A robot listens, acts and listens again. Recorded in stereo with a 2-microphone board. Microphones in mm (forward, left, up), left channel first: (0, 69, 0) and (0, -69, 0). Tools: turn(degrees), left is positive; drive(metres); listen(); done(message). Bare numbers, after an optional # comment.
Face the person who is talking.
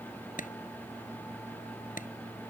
listen()
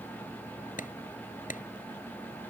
listen()
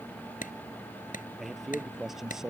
turn(-30)
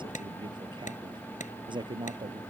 # So it is at 145° right.
turn(-145)
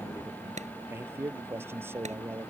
# The man speaking is now 15° right.
turn(-15)
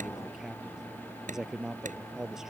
done("Found it: a man speaking, straight ahead.")